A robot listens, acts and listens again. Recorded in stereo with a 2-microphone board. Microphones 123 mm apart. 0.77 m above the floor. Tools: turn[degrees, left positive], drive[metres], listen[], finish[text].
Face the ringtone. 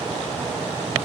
Action: listen[]
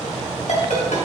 Action: turn[90]
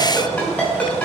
Thought: So it is at 10° left.
Action: turn[10]
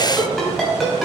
Action: finish[Found it: a ringtone, straight ahead, 2 to 4 m away.]